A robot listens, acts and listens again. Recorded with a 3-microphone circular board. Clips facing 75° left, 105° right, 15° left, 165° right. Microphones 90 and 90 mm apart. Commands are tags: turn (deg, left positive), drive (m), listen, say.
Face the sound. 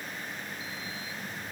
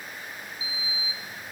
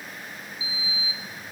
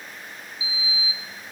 <turn deg="60"/>
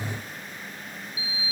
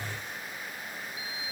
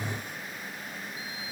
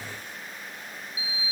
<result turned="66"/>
<turn deg="-10"/>
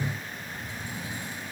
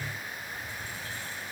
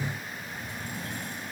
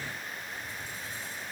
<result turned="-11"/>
<say>Facing the sliding door.</say>